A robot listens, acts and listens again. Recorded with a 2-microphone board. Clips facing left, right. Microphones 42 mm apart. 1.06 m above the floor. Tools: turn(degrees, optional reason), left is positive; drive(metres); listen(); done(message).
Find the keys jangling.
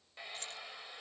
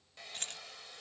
turn(degrees=-60, reason="The keys jangling: about 60° right or 120° right.")
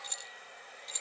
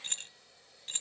turn(degrees=-45, reason="So it is at 45° right.")
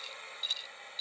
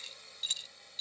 done("Facing the keys jangling.")